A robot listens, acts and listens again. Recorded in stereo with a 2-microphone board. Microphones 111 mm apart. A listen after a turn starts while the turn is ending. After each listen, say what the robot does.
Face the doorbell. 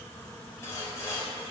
Keep listening.
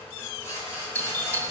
Turn 15° left.
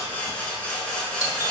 Keep listening.
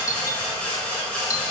Turn 150° left.
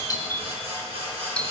Turn 15° left.
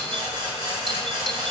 Keep listening.
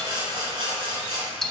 Facing the doorbell, 1 to 2 m away.